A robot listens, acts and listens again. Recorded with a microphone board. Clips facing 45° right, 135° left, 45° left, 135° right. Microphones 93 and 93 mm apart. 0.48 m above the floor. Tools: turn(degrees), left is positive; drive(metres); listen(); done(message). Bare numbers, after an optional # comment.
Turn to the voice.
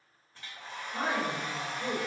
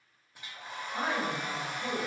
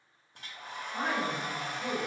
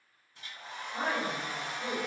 # The woman speaking: 70° right.
turn(-70)
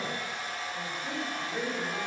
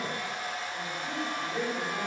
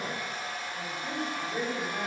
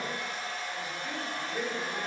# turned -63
# The woman speaking is now 65° left.
turn(65)
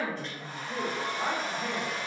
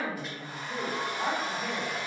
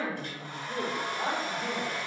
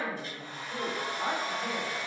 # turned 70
# The woman speaking is now 45° left.
turn(45)
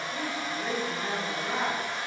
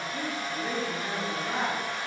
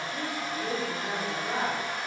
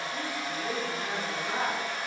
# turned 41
done("Facing the woman speaking.")